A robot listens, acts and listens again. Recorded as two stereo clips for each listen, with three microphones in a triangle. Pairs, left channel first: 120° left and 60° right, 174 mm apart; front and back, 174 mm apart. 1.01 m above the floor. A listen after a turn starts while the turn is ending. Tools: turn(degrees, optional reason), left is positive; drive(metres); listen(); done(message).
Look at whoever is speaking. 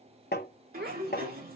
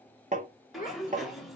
turn(degrees=-40, reason="The child speaking: 40° right.")
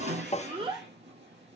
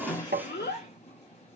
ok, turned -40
done("Found it: a child speaking, straight ahead.")